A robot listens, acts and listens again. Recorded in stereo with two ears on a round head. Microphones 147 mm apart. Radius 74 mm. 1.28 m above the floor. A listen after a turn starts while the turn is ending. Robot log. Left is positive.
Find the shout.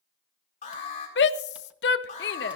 note: The shout: about 75° left or 105° left.
cmd yaw +75
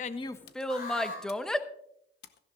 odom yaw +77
end: Found it: a shout, straight ahead.